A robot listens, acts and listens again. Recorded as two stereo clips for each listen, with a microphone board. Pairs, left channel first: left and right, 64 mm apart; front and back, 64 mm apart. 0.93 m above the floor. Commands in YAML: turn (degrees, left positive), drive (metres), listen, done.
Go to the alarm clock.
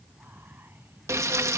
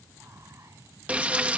listen: true
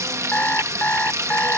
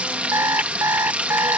turn: 150
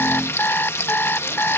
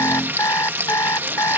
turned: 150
turn: 35
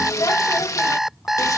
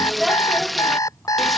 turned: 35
drive: 1.0
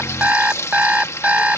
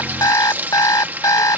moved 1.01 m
turn: -25
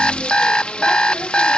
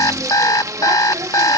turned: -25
turn: 15
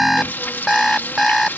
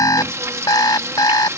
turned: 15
drive: 1.0
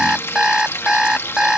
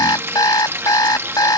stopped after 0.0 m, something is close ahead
turn: -10
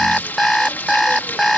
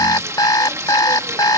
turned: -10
done: "I am next to the alarm clock."